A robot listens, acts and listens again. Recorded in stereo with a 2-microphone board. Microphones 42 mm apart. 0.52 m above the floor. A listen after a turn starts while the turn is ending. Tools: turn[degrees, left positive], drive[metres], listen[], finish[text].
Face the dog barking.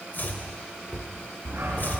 Action: turn[-90]
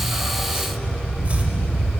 Thought: So it is at 20° left.
Action: turn[20]
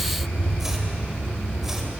Action: finish[Facing the dog barking, 2 to 4 m away.]